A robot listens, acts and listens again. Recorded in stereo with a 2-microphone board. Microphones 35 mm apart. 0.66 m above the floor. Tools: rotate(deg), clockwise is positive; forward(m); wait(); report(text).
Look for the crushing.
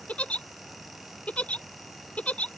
wait()
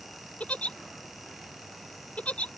wait()
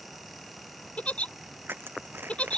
rotate(90)
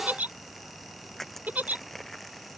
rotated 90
report("Facing the crushing.")